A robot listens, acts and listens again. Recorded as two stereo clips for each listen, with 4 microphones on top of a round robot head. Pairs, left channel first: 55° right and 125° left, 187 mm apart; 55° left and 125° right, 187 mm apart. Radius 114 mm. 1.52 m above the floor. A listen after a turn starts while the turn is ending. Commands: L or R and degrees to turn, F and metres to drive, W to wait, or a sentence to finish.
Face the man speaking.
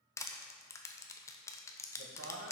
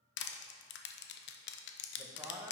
L150
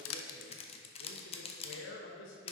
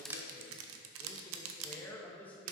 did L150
R30
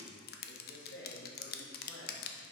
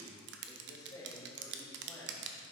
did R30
R25
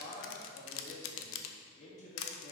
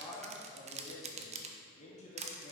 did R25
Found it: a man speaking, straight ahead, 2 to 4 m away.